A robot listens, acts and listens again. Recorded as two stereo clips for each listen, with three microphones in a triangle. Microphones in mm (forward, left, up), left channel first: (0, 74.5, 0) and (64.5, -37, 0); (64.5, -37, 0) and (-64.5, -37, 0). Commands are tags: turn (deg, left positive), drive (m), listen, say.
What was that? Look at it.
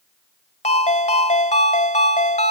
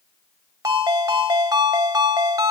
<turn deg="120"/>
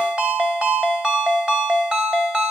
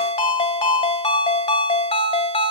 <turn deg="25"/>
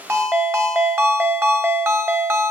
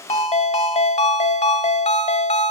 <turn deg="10"/>
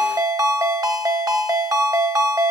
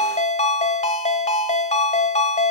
<say>Found it: a ringtone, straight ahead.</say>